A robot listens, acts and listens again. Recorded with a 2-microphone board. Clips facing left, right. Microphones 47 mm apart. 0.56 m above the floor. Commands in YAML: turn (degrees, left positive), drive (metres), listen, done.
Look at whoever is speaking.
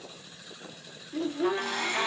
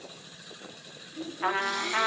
turn: 65
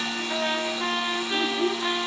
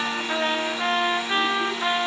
listen: true
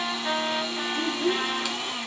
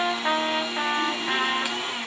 turn: 40
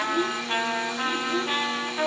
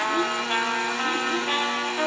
done: "Found it: a child speaking, straight ahead."